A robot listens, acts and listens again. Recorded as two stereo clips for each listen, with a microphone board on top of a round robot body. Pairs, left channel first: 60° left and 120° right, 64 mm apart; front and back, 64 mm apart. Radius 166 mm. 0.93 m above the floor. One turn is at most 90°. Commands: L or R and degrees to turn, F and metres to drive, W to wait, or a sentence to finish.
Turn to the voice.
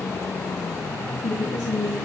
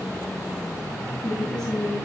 L80
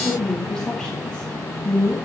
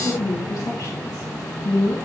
R20
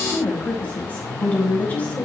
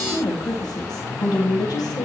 Found it: a woman speaking, straight ahead.